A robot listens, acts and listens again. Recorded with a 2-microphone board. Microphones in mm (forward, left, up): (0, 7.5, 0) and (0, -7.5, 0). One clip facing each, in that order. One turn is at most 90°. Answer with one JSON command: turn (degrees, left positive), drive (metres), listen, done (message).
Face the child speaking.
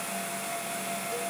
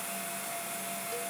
{"listen": true}
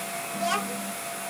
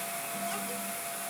{"turn": 50}
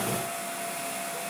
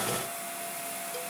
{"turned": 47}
{"listen": true}
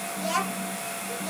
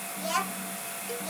{"done": "Facing the child speaking."}